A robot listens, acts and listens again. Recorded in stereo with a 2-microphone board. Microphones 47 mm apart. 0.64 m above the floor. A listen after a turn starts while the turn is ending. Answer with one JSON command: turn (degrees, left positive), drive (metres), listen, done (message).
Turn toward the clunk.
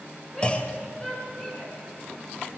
{"turn": 25}
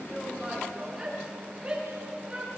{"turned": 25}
{"listen": true}
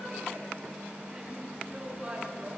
{"done": "I heard a clunk, but can't make it out now. It was about straight ahead or 130° left."}